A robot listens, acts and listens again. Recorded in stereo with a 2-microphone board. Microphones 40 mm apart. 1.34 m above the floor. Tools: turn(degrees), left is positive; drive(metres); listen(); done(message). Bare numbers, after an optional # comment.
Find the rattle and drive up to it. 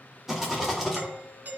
turn(-30)
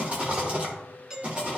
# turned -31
# So it is at 140° right.
turn(-140)
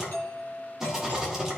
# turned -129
# The rattle is now 10° right.
turn(-10)
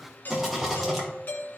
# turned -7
drive(1.0)
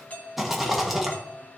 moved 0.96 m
drive(1.0)
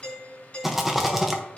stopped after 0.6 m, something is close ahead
done("Arrived at the rattle, straight ahead.")